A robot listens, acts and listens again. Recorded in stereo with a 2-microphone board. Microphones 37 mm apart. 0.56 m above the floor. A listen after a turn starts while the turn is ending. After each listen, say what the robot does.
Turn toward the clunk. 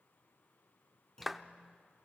Turn 20° left.
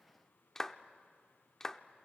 Keep listening.
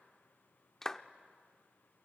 I heard a clunk, but can't make it out now. It was about straight ahead or 140° left.